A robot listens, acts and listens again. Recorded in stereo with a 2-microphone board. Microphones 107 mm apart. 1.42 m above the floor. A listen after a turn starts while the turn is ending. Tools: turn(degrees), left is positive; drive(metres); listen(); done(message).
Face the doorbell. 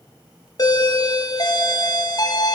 turn(degrees=40)
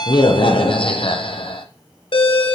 turn(degrees=95)
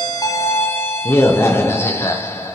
turn(degrees=30)
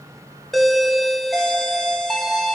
done("Facing the doorbell, under 1 m away.")